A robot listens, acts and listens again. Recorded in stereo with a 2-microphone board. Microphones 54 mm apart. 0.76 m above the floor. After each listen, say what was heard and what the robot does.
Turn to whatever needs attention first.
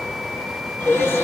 The crying: about 50° left or 130° left. Turn 50° left.
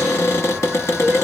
Keep listening.
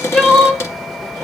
Facing the crying, under 1 m away.